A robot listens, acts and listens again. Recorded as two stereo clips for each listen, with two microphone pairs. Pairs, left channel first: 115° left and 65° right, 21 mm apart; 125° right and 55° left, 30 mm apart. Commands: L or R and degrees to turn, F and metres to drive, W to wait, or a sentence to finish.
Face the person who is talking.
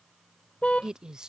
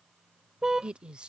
Facing the woman speaking.